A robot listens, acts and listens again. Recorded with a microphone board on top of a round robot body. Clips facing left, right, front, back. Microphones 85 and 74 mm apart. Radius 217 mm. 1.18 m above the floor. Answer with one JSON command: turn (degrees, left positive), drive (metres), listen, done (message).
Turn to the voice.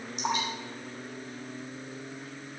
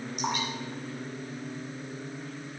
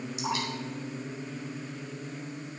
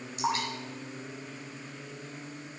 {"listen": true}
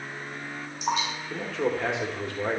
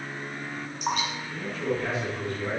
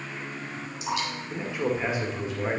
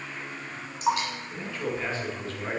{"turn": 75}
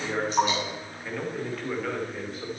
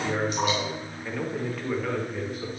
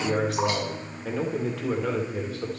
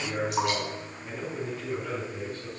{"done": "Facing the man speaking."}